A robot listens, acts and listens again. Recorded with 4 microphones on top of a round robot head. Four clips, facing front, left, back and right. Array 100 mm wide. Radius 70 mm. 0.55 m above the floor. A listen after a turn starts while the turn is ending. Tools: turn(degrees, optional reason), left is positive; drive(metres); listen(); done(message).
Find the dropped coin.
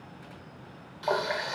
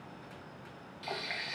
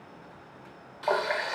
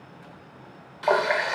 listen()
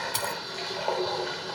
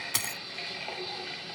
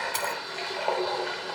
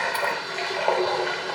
turn(degrees=95, reason="The dropped coin: 95° left.")
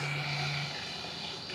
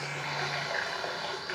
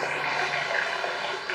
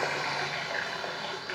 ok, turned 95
done("I heard a dropped coin from this way, but can't make it out now.")